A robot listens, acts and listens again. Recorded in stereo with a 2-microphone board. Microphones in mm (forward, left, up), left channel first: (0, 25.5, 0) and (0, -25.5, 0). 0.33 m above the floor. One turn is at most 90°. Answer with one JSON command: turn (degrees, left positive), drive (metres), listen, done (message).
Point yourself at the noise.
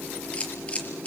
{"turn": 30}
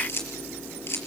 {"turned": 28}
{"turn": 90}
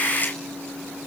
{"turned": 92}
{"turn": 30}
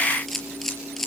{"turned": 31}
{"done": "Found it: a camera shutter, straight ahead, over 4 m away."}